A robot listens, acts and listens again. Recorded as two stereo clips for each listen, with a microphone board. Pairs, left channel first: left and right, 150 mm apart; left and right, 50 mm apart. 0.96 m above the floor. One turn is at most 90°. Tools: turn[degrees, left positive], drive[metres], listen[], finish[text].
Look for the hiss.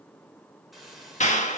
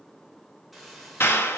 Action: turn[30]
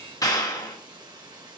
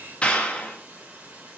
Thought: So it is at 30° right.
Action: turn[-30]
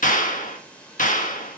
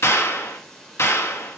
Thought: The hiss is now 10° left.
Action: turn[10]
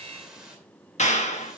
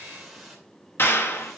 Action: finish[Found it: a hiss, straight ahead.]